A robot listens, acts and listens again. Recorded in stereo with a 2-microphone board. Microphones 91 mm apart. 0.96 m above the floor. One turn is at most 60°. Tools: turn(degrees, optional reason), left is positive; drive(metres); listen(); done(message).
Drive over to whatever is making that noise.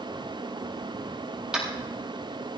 turn(degrees=-30)
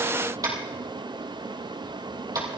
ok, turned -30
turn(degrees=-60, reason="So it is at 140° right.")
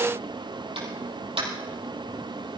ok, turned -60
turn(degrees=-60, reason="The tapping is now 80° right.")
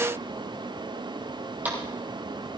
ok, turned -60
turn(degrees=-20, reason="The tapping is now 20° right.")
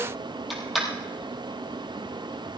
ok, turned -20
drive(metres=1.0)
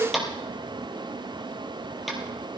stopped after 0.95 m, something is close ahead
done("Something is in my way. I am facing the tapping but have not reached it.")